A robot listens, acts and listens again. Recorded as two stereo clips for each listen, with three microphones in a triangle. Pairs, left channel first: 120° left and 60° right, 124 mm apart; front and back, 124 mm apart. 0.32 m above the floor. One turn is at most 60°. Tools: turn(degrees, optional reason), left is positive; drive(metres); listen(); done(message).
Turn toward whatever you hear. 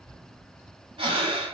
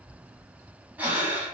turn(degrees=-60, reason="The breathing: 105° right.")
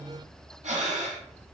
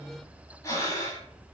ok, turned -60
turn(degrees=-60, reason="The breathing is now 60° right.")
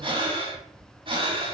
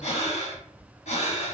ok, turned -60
turn(degrees=-20, reason="The breathing is now 20° right.")
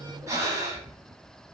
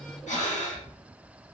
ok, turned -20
done("Facing the breathing, under 1 m away.")